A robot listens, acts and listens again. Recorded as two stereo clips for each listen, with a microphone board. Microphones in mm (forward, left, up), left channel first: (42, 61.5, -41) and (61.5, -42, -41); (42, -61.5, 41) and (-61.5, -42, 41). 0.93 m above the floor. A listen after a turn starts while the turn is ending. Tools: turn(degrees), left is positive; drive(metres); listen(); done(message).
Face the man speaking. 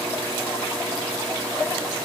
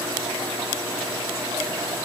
listen()
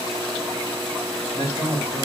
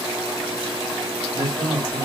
turn(degrees=125)
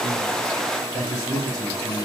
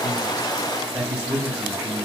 turn(degrees=50)
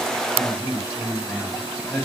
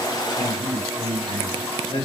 turn(degrees=10)
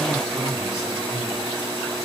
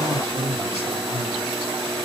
done("Found it: a man speaking, straight ahead, 2 to 4 m away.")